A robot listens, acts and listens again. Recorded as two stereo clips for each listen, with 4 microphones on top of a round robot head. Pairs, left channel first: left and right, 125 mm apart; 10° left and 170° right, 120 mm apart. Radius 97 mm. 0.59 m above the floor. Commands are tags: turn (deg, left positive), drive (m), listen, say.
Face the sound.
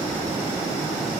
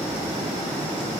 <listen/>
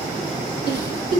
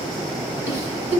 <turn deg="120"/>
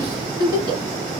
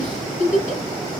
<turn deg="-35"/>
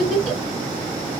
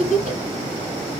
<say>Found it: a giggle, straight ahead, 1 to 2 m away.</say>